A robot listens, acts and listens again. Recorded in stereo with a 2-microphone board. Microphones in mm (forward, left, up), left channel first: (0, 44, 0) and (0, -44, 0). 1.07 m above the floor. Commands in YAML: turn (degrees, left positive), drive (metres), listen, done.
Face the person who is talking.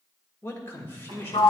turn: 30
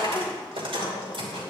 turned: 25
listen: true
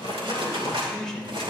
done: "Facing the man speaking."